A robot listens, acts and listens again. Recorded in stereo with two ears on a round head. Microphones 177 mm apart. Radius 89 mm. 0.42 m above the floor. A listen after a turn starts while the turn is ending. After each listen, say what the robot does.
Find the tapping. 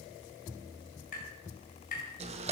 Turn 45° left.
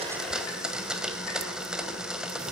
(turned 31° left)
Keep listening.
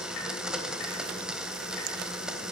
Keep listening.
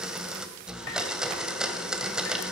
I heard tapping, but can't make it out now. It was about 15° left or 105° left.